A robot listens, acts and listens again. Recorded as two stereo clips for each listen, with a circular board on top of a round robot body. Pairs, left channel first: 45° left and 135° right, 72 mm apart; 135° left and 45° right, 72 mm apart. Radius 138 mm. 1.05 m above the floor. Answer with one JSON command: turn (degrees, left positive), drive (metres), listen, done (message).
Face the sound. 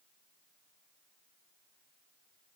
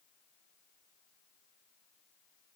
{"listen": true}
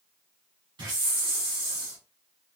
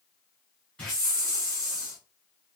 {"turn": -150}
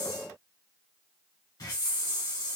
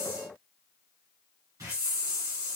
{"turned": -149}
{"done": "Facing the hiss, 1 to 2 m away."}